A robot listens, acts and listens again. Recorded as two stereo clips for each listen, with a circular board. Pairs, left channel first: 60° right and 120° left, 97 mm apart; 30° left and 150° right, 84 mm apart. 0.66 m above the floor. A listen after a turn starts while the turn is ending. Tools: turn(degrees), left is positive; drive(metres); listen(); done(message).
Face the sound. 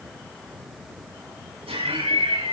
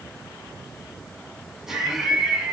turn(degrees=125)
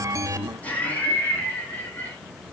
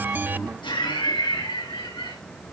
turn(degrees=10)
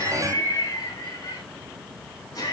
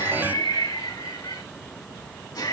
turn(degrees=-10)
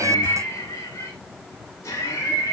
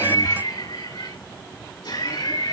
done("Found it: laughter, straight ahead.")